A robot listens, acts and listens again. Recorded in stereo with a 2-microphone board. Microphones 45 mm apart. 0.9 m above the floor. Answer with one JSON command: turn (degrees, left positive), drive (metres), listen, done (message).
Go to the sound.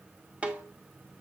{"turn": -30}
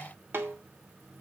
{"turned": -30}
{"turn": -120}
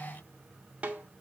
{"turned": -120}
{"turn": -30}
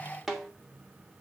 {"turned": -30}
{"drive": 1.0}
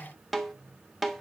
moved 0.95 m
{"drive": 1.0}
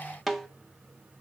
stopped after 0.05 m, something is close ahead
{"done": "Arrived at the snare drum, straight ahead."}